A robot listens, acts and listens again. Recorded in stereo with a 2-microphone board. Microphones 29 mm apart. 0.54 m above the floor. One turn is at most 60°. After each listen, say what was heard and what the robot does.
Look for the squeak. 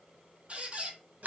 The squeak: about 40° right or 140° right. Turn 40° right.
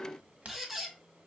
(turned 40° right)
So it is at 10° right. Turn 10° right.
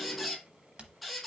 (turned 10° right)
Facing the squeak.